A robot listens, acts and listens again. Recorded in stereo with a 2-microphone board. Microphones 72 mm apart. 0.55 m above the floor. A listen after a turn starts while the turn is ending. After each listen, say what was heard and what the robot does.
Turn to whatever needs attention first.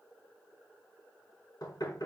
Keep listening.
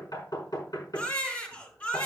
The baby crying: about 20° left or 160° left. Turn 20° left.
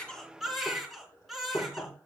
Facing the baby crying, 2 to 4 m away.